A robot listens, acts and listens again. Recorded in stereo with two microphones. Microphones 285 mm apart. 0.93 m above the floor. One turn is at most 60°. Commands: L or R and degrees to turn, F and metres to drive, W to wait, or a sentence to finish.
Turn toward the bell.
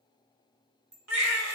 L35
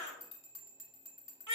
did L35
L60
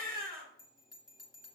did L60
L60
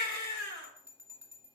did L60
R10
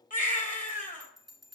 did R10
Found it: a bell, straight ahead, 1 to 2 m away.